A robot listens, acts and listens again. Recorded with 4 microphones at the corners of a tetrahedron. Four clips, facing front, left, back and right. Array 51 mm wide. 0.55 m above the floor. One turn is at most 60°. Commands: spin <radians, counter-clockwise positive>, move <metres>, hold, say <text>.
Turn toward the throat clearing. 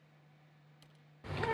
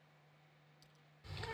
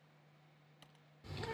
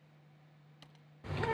hold
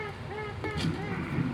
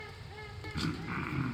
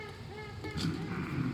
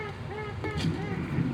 spin 1.05
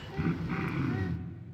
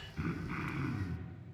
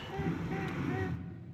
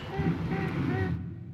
spin 0.44
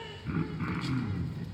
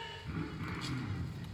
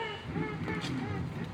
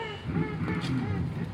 say Found it: throat clearing, straight ahead.